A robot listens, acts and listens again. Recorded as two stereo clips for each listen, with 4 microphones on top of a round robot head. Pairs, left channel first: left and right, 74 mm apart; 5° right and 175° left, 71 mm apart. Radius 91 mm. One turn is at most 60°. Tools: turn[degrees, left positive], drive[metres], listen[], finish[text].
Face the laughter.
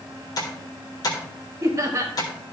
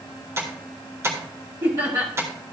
Thought: The laughter: 140° right.
Action: turn[-60]
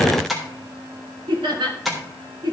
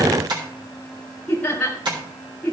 Thought: The laughter is now 85° right.
Action: turn[-60]
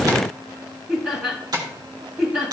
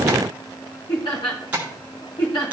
Thought: The laughter is now 20° right.
Action: turn[-20]
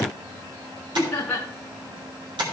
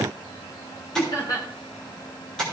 Thought: The laughter is now 10° left.
Action: turn[10]
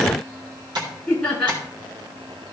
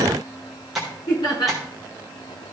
Action: finish[Facing the laughter, 2 to 4 m away.]